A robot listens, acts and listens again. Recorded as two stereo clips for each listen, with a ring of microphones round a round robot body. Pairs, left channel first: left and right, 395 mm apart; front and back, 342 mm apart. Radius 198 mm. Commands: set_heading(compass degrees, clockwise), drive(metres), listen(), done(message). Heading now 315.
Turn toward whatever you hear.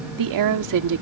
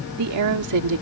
set_heading(95)
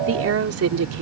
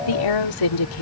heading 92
set_heading(132)
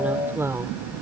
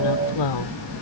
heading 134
done("Facing the woman speaking.")